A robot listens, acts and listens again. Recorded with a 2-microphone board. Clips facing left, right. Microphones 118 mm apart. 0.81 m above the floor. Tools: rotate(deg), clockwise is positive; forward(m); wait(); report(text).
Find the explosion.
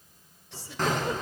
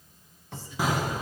rotate(30)
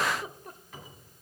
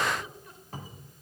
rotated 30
wait()
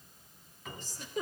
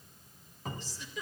report("I heard an explosion, but can't make it out now. It was about 20° left or 140° right.")